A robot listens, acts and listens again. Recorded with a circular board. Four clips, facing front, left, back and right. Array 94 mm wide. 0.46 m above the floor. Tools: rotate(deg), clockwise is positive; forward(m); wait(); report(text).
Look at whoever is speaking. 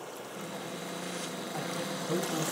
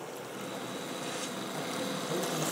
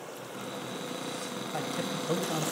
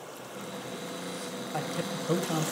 rotate(125)
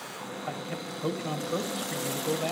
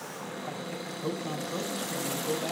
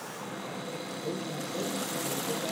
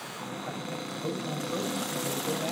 rotate(10)
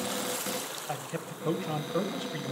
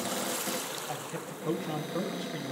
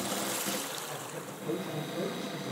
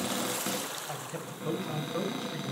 report("Facing the man speaking.")